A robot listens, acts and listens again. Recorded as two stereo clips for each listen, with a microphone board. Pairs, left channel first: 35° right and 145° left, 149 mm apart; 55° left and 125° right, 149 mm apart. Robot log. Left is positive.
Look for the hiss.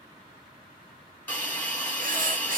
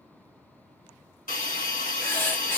note: The hiss: 40° left.
cmd yaw +40
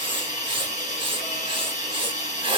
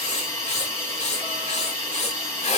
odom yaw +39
end: Facing the hiss.